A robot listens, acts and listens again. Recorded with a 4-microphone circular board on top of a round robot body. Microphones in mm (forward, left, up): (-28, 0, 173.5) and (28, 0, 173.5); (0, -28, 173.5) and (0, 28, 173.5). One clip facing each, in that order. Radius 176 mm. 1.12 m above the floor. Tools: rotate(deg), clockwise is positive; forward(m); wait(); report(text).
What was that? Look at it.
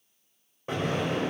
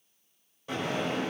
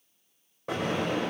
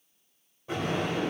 rotate(120)
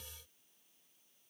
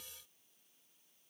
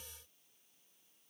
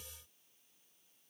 report("I heard an explosion from this way, but can't make it out now.")